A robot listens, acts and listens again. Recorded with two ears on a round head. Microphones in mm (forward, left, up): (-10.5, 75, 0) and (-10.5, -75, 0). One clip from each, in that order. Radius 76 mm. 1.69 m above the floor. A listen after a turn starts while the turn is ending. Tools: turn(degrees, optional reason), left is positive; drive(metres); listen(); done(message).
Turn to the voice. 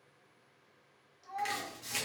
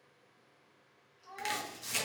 turn(degrees=30)
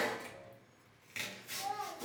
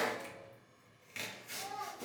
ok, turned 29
turn(degrees=135, reason="So it is at 135° left.")
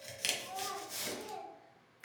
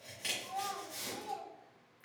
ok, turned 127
turn(degrees=10, reason="The child speaking is now 10° left.")
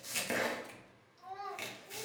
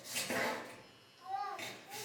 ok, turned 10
done("Facing the child speaking.")